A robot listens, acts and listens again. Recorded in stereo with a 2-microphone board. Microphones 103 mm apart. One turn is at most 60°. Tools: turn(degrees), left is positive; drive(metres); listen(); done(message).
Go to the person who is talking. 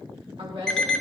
turn(degrees=-60)
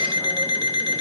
listen()
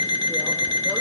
listen()
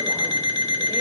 done("I heard a woman speaking, but can't make it out now. It was about 10° right or 50° right. I did not reach it.")